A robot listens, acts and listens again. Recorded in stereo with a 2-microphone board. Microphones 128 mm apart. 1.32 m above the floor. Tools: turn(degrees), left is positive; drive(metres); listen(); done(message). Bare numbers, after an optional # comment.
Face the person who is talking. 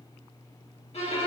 listen()
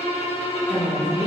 # The woman speaking: about 35° left or 145° left.
turn(35)
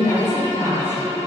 # So it is at 95° left.
turn(95)
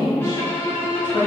done("Facing the woman speaking.")